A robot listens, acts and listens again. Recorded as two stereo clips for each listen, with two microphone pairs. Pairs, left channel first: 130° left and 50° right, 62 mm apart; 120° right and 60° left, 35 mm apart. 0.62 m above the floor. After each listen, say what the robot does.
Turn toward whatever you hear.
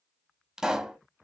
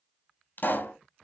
Turn 130° right.
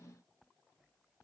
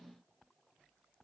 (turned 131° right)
Facing where the pop came from. I can't hear it now.